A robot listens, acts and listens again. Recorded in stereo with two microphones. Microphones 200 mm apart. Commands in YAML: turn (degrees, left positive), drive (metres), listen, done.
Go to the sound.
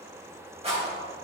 turn: -30
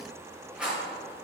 drive: 1.0
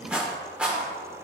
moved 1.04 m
drive: 1.0
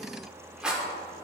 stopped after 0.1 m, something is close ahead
done: "Arrived at the rattle, straight ahead."